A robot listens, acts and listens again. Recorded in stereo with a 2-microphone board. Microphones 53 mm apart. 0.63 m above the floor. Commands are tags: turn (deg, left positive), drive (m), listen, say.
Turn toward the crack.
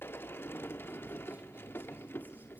<listen/>
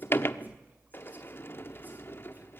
<listen/>
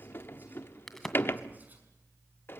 <turn deg="30"/>
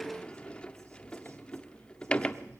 <listen/>
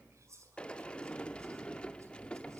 <say>I heard a crack, but can't make it out now. It was about 25° right or 145° left.</say>